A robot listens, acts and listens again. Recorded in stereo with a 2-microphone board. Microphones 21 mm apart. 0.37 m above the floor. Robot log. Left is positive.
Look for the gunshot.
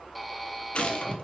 note: The gunshot: about 60° left or 120° left.
cmd yaw +60
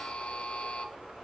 cmd idle
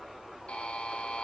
end: I heard a gunshot, but can't make it out now. It was about straight ahead or 60° left.